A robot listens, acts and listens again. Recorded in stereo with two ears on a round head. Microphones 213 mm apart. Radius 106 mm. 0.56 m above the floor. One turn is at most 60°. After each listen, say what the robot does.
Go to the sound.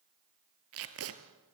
Turn 60° right.
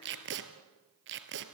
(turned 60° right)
Turn 50° right.
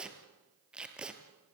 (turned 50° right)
Drive 1.0 m forward.
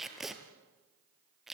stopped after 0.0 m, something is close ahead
Something is in my way. I am facing the tape being pulled but have not reached it.